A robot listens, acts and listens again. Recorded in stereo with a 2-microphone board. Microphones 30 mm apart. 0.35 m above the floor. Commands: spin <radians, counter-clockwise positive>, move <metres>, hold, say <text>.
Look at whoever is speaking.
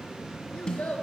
spin 1.13
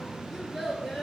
say Found it: a child speaking, straight ahead, 2 to 4 m away.